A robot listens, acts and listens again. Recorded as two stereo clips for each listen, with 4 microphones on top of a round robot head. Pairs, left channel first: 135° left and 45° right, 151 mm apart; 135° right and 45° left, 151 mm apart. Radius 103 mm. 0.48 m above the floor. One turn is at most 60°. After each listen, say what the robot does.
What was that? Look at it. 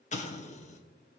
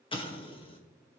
Turn 60° left.
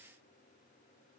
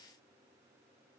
Turn 60° left.
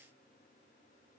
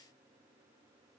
Turn 50° left.
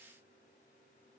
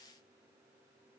I heard an explosion from this way, but can't make it out now.